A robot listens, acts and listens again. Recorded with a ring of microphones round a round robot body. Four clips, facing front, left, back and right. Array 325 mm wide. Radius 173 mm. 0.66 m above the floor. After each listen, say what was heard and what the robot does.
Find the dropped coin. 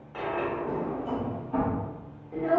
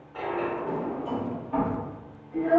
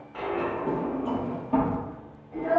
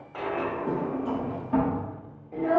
The dropped coin: 75° right. Turn 75° right.
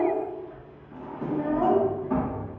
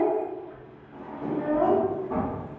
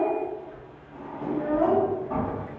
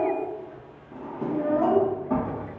Facing where the dropped coin came from. I can't hear it now.